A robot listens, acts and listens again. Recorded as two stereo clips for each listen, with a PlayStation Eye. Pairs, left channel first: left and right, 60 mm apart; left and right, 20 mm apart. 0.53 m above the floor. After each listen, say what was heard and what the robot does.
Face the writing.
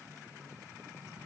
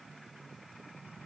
Keep listening.
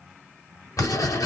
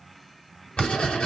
The writing: about 60° left or 120° left. Turn 60° left.
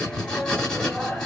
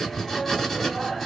So it is at 10° left. Turn 10° left.
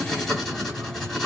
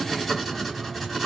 Facing the writing.